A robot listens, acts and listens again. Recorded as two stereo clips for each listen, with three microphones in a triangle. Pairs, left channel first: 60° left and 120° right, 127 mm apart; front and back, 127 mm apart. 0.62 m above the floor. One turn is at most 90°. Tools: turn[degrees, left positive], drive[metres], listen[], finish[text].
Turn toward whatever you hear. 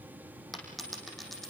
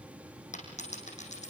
Thought: The dropped coin: 30° right.
Action: turn[-30]
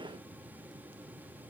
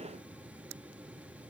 Action: finish[I heard a dropped coin from this way, but can't make it out now.]